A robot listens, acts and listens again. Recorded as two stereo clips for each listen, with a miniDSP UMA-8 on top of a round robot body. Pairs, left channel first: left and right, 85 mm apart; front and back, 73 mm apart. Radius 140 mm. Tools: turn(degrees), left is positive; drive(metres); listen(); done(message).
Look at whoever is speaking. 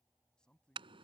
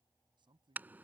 turn(degrees=170)
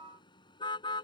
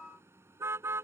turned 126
turn(degrees=45)
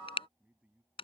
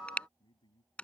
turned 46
turn(degrees=-15)
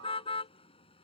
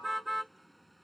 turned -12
listen()
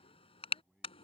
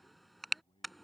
done("Facing the man speaking.")